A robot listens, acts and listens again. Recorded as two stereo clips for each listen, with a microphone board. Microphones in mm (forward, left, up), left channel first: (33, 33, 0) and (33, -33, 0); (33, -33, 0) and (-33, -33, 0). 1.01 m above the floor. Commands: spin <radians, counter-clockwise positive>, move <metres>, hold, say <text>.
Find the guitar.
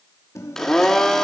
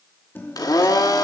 spin 0.87
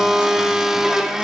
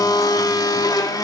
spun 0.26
spin 0.61
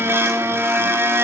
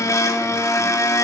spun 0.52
hold
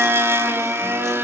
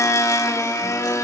say Facing where the guitar came from. I can't hear it now.